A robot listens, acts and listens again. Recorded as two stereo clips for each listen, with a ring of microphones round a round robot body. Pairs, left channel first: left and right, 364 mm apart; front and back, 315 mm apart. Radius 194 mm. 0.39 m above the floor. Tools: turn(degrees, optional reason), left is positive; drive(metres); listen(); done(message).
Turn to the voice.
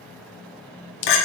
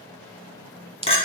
listen()
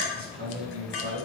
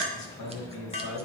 turn(degrees=-35, reason="The man speaking: 35° right.")
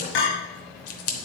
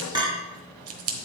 listen()
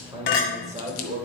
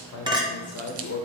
turn(degrees=-30, reason="The man speaking is now 30° right.")
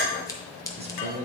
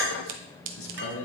turn(degrees=-30, reason="The man speaking is now 30° right.")
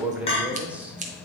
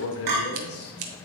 done("Facing the man speaking.")